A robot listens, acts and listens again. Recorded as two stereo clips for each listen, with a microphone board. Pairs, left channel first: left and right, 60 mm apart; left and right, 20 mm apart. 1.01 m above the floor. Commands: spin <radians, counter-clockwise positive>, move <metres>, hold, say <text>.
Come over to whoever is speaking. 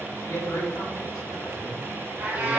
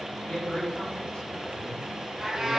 spin 1.57
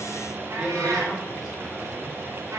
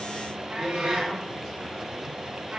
hold
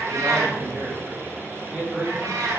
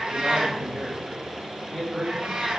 spin -0.17
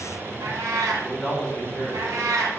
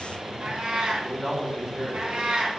move 1.0
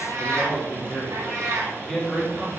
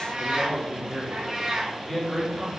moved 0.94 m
spin 0.17
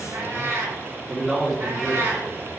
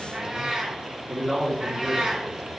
move 1.0
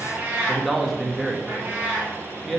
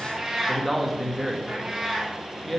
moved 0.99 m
move 1.0
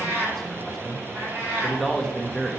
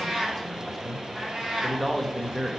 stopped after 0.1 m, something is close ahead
say I am next to the man speaking.